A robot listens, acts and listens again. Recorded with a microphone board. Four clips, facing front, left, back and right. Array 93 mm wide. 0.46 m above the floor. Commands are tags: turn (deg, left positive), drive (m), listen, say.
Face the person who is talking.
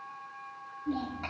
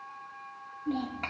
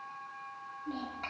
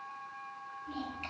<turn deg="90"/>
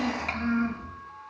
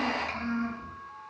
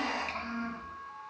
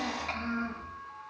<say>Facing the child speaking, over 4 m away.</say>